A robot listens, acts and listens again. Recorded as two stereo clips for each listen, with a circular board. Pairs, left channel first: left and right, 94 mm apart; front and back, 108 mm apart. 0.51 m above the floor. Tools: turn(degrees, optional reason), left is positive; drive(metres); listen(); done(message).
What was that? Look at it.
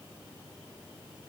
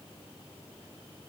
listen()
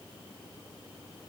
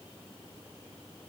listen()
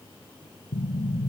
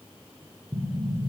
turn(degrees=125, reason="The explosion: 125° left.")
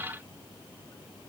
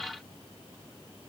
done("I heard an explosion from this way, but can't make it out now.")